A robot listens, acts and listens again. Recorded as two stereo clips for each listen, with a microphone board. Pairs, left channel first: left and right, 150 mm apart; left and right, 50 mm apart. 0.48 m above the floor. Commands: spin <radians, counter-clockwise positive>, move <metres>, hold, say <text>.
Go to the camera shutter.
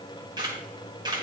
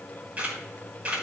spin -0.52
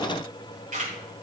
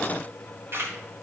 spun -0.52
spin -2.09
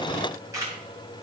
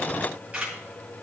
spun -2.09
spin -0.35
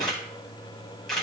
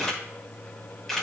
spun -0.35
move 1.0
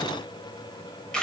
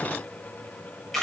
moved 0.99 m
move 1.0
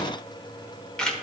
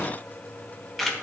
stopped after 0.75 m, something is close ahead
say I am next to the camera shutter.